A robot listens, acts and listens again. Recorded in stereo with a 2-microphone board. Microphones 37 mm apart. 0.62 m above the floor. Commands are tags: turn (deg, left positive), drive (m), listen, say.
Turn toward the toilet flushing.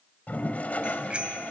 <turn deg="45"/>
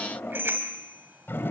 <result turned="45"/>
<turn deg="90"/>
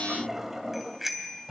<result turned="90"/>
<turn deg="-10"/>
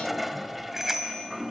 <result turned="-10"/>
<say>Found it: a toilet flushing, straight ahead, 1 to 2 m away.</say>